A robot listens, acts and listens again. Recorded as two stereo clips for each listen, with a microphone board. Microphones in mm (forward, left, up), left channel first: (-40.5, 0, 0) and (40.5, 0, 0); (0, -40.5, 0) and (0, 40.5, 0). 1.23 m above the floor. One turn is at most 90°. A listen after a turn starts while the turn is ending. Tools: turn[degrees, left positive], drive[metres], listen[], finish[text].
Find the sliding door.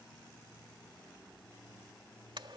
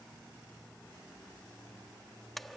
Action: listen[]
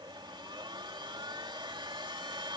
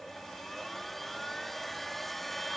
Action: listen[]
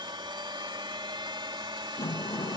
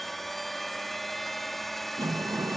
Thought: The sliding door: 135° left.
Action: turn[90]
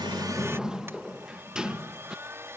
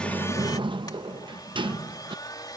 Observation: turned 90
Thought: The sliding door is now 80° left.
Action: turn[80]
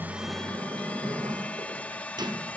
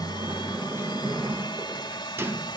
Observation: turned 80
Thought: The sliding door is now 30° left.
Action: turn[30]
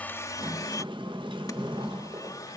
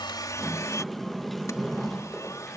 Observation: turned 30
Action: finish[Facing the sliding door.]